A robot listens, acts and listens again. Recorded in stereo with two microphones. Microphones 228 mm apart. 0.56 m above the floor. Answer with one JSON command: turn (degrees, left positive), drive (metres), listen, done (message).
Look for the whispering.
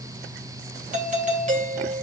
{"listen": true}
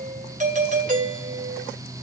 {"listen": true}
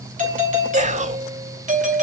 {"turn": -30}
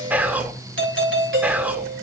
{"done": "Facing the whispering, 1 to 2 m away."}